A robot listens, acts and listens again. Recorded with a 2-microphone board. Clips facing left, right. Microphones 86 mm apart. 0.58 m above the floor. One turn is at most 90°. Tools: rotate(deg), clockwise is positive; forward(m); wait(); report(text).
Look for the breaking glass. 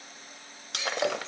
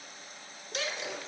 rotate(-90)
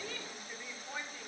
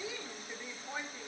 report("Facing where the breaking glass came from. I can't hear it now.")